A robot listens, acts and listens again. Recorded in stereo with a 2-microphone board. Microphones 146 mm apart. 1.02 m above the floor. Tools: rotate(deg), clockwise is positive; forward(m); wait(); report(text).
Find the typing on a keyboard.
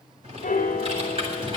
rotate(40)
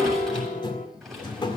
report("Found it: typing on a keyboard, straight ahead, over 4 m away.")